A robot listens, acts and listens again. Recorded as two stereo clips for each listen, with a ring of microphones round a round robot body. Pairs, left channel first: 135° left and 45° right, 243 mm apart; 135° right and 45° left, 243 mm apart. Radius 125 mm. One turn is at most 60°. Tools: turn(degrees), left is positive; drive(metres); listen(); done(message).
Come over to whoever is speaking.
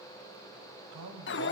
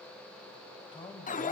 turn(degrees=-60)
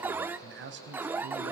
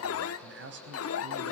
drive(metres=1.0)
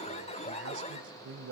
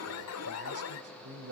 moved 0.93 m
drive(metres=1.0)
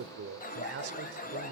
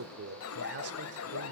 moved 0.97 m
drive(metres=1.0)
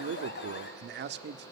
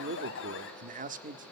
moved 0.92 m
turn(degrees=-10)
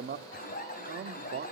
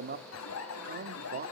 drive(metres=1.0)
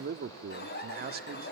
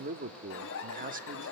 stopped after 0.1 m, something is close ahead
done("Arrived at the man speaking, straight ahead.")